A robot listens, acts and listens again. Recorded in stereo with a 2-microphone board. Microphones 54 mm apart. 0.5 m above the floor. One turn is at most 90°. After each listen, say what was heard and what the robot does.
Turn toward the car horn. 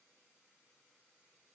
Keep listening.
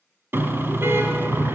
The car horn: about 50° right or 130° right. Turn 50° right.
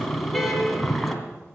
Found it: a car horn, straight ahead, 2 to 4 m away.